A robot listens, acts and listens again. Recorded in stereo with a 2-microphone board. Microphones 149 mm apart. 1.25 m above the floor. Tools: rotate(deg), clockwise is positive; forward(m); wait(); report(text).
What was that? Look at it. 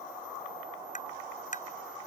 rotate(-60)
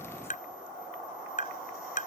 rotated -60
rotate(-60)
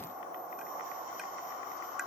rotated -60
wait()
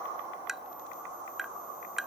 report("Facing the tapping.")